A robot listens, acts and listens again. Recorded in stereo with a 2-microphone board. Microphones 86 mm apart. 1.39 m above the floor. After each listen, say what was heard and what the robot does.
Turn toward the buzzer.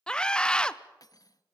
Keep listening.
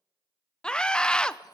Keep listening.
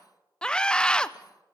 I can't make out a buzzer to turn to.